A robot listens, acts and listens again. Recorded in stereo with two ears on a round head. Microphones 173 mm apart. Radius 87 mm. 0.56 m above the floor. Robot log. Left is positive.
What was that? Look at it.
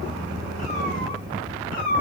note: The cat meowing: about 50° left or 130° left.
cmd yaw +50
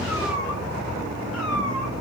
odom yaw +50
cmd idle
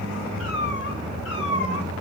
note: So it is at 65° left.
cmd yaw +65
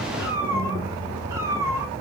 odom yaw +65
note: The cat meowing is now 15° right.
cmd yaw -15
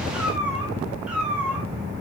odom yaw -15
end: Facing the cat meowing.